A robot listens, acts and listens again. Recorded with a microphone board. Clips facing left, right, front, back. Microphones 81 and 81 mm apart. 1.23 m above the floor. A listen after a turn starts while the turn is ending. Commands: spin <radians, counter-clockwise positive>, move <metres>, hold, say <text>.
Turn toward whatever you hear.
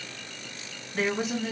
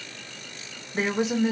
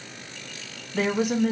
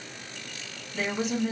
spin -0.35
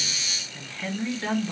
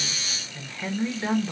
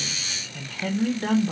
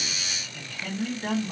spin -0.17
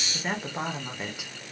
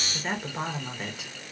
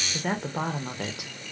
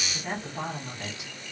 say Found it: a woman speaking, straight ahead.